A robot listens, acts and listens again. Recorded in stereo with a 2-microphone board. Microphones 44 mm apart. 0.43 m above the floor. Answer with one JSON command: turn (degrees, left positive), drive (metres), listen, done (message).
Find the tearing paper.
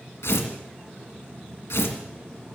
{"turn": 90}
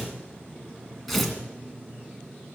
{"done": "Found it: tearing paper, straight ahead, 2 to 4 m away."}